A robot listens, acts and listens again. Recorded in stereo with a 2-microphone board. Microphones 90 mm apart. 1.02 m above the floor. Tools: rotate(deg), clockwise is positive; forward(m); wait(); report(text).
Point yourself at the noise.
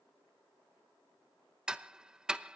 rotate(30)
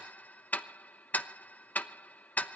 rotate(-20)
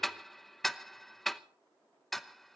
report("Facing the ticking, under 1 m away.")